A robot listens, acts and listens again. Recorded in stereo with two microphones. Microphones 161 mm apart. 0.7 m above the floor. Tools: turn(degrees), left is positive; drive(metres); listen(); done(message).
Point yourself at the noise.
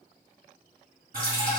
turn(degrees=-60)
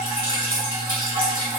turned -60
turn(degrees=-60)
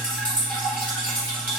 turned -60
turn(degrees=10)
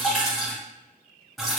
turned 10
done("Facing the dripping.")